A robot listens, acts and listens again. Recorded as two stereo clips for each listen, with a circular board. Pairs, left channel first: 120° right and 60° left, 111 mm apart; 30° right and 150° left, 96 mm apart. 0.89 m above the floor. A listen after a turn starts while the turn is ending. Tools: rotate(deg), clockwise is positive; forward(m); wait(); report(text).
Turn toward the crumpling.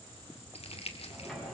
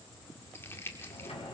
rotate(95)
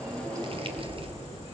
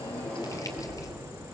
wait()
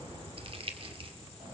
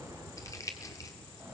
rotate(-25)
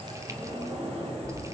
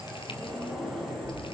wait()
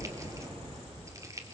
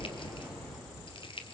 report("Found it: crumpling, straight ahead.")